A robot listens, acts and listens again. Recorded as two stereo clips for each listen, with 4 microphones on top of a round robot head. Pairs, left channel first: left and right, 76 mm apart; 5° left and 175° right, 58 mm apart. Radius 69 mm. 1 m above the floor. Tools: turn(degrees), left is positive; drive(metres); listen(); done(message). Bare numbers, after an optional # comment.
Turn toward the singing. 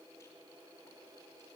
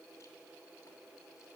listen()
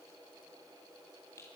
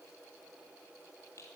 listen()
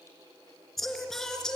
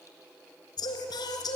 # The singing: 10° left.
turn(10)
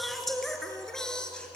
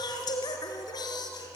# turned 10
# The singing is now 10° left.
turn(10)
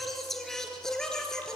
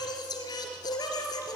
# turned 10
done("Facing the singing.")